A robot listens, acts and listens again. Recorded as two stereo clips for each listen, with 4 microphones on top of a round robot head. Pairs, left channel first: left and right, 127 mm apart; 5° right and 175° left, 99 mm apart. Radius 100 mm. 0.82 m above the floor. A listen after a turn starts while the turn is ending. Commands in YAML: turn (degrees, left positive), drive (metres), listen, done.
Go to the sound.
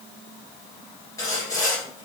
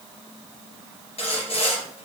turn: 20
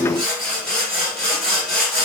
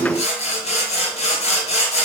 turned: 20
drive: 1.0
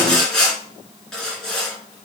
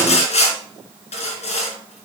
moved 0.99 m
drive: 1.0
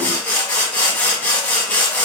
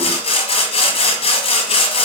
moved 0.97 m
turn: 10
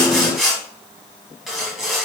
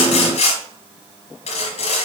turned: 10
drive: 1.0
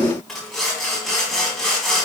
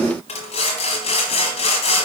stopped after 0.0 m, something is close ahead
done: "Arrived at the sawing, straight ahead."